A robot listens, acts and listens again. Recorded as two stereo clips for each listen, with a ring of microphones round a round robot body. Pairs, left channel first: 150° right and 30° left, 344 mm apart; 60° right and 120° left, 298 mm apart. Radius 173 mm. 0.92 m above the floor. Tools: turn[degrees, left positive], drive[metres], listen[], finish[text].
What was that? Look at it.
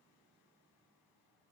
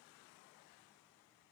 Action: listen[]
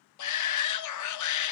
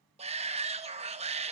Thought: The shout: 170° right.
Action: turn[-170]
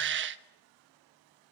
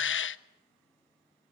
Thought: The shout is now 20° right.
Action: turn[-20]
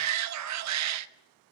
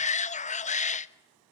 Action: finish[Found it: a shout, straight ahead, 1 to 2 m away.]